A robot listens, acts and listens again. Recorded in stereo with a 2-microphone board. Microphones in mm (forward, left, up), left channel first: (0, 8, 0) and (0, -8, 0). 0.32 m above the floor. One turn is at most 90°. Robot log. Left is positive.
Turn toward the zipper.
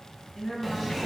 cmd yaw +30
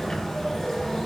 note: So it is at 150° left.
cmd yaw +90
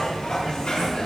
note: The zipper is now 70° left.
cmd yaw +70
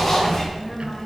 note: The zipper is now 25° left.
cmd yaw +25
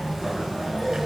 note: The zipper is now 20° right.
cmd yaw -20
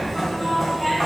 end: Facing the zipper, over 4 m away.